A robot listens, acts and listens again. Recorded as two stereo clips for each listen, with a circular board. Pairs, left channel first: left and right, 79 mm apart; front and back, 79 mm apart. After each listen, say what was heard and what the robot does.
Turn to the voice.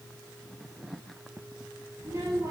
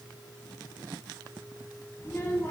The child speaking: 55° right. Turn 55° right.
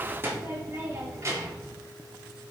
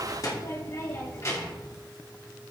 The child speaking is now 50° right. Turn 50° right.
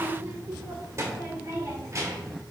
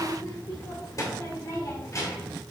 The child speaking is now 45° right. Turn 45° right.
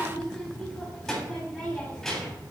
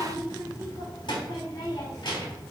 Found it: a child speaking, straight ahead.